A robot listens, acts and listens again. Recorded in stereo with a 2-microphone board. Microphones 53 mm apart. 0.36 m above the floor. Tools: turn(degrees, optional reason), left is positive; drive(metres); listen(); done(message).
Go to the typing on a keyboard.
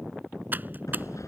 turn(degrees=-35, reason="The typing on a keyboard: about 35° right or 145° right.")
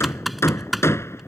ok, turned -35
drive(metres=1.0)
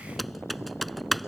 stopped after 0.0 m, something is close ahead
done("Something is in my way. I am facing the typing on a keyboard but have not reached it.")